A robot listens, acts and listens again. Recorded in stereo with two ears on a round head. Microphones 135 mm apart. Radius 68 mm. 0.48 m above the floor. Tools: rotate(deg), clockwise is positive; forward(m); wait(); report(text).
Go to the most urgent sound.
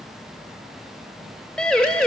rotate(-30)
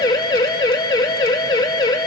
rotate(-145)
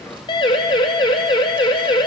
rotate(-35)
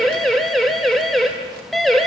forward(1.0)
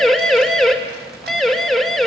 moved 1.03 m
forward(1.0)
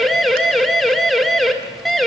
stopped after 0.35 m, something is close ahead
report("I am next to the siren.")